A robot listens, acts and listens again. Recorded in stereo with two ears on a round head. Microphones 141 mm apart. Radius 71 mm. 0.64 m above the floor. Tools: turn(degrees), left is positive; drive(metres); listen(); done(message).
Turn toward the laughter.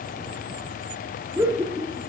turn(degrees=-20)
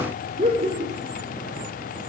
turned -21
turn(degrees=-135)
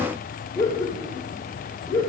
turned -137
turn(degrees=30)
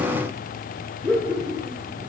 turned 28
done("Found it: laughter, straight ahead, 2 to 4 m away.")